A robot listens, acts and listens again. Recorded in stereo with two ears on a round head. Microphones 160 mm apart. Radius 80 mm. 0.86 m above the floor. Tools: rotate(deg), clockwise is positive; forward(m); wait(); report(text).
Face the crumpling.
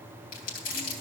rotate(-55)
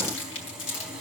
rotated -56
rotate(-70)
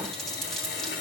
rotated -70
report("Found it: crumpling, straight ahead, 2 to 4 m away.")